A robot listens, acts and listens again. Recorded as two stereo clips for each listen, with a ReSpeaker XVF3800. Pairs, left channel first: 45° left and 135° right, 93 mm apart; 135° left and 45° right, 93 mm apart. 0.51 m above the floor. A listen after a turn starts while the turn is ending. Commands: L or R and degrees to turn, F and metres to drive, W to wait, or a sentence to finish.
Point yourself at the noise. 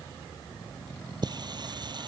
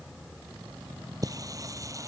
R95
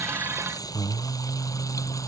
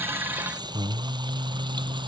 R10
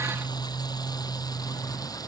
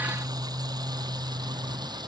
Found it: singing, straight ahead.